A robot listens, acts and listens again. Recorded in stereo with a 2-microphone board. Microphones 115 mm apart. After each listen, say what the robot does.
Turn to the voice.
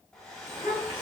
Turn 40° right.
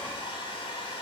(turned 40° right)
Keep listening.
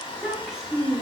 Facing the child speaking.